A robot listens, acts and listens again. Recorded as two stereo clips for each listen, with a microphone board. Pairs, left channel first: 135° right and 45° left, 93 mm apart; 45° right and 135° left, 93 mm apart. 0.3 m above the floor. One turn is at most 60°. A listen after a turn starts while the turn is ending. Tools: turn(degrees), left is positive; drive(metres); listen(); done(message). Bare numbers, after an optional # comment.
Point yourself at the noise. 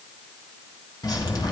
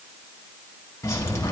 # The dripping: 95° right.
turn(-60)
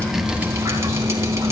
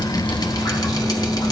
# The dripping is now 10° right.
turn(-10)
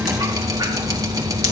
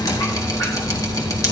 done("Facing the dripping.")